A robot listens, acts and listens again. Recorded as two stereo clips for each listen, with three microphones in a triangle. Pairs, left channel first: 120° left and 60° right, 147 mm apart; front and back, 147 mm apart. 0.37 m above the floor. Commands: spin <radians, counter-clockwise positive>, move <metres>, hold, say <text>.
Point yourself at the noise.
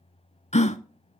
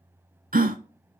spin 2.79
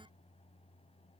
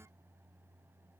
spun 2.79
say I heard a gasp from this way, but can't make it out now.